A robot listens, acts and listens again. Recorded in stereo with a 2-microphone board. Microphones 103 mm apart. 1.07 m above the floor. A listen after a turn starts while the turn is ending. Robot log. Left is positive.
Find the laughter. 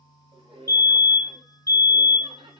note: The laughter: about 60° right or 120° right.
cmd yaw -60
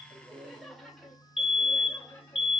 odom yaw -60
note: So it is at 20° left.
cmd yaw +20
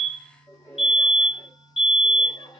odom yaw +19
note: The laughter is now 30° left.
cmd yaw +30
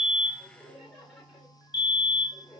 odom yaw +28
end: Facing the laughter.